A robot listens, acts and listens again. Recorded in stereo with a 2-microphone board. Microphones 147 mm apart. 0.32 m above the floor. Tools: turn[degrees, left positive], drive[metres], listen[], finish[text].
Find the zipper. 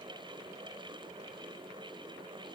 Action: listen[]
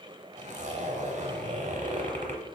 Thought: The zipper: about 55° right or 125° right.
Action: turn[-55]
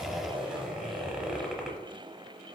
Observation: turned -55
Action: finish[Facing the zipper.]